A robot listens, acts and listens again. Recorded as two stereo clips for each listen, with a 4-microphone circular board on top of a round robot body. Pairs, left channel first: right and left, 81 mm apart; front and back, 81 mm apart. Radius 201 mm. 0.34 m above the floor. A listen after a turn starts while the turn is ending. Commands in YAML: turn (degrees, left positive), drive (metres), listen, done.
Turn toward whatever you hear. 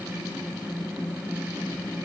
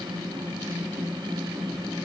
listen: true
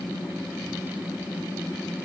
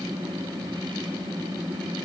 listen: true
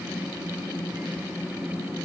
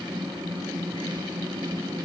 done: "I can't make out anything."